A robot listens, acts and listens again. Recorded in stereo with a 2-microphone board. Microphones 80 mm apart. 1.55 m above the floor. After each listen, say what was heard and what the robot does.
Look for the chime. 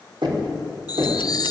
The chime: about 50° left or 130° left. Turn 50° left.
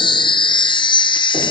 So it is at 80° left. Turn 80° left.
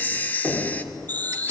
The chime is now 20° left. Turn 20° left.
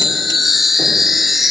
Facing the chime, under 1 m away.